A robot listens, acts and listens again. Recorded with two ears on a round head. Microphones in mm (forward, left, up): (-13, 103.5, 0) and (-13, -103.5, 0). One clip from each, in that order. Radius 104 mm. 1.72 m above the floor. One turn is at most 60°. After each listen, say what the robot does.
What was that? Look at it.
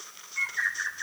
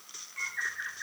Turn 30° left.
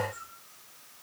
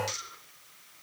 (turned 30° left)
Keep listening.
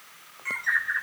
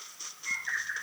Turn 60° left.
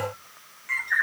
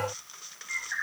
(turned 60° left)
Turn 60° left.
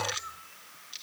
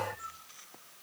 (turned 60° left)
Turn 15° left.
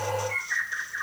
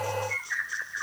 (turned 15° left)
Found it: a bird, straight ahead, 2 to 4 m away.